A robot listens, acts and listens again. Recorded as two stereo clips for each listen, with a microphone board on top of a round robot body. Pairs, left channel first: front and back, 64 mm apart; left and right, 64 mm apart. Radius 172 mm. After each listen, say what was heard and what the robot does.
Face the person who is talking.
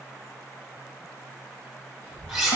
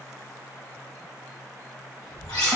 The child speaking: 60° right. Turn 60° right.
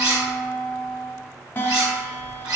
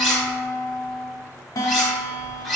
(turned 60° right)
The child speaking is now 20° left. Turn 20° left.
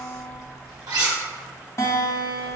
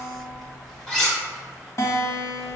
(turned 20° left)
Found it: a child speaking, straight ahead, 1 to 2 m away.